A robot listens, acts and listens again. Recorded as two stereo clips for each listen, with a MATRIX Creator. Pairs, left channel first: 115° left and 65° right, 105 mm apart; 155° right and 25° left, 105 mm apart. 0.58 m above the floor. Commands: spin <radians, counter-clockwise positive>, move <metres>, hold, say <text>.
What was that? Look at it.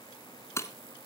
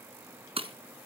spin 0.87
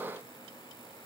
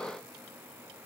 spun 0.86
say Facing where the breaking glass came from. I can't hear it now.